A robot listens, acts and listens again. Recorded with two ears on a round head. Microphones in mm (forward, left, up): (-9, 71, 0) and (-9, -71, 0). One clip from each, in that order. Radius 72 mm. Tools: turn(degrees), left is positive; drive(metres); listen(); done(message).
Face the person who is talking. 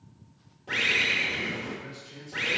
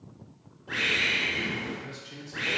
turn(degrees=-50)
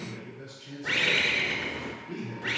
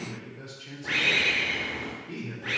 turn(degrees=-10)
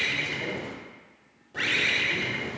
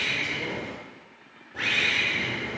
listen()
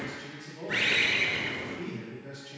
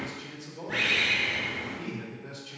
done("Facing the man speaking, 2 to 4 m away.")